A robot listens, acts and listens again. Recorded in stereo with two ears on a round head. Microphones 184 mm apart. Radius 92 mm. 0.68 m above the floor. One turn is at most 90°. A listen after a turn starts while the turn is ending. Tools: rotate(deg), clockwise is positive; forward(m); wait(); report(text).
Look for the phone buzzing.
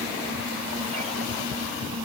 wait()
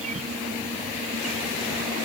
wait()
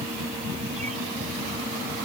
report("I can't make out a phone buzzing to turn to.")